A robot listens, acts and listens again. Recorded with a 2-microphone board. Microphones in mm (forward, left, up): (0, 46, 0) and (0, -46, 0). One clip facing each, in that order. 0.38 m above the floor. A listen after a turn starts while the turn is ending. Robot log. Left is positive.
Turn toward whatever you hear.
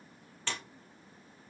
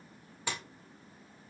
cmd yaw -30
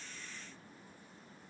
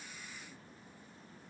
cmd idle
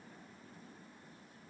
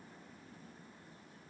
end: I heard a splash, but can't make it out now. It was about 15° left or 135° right.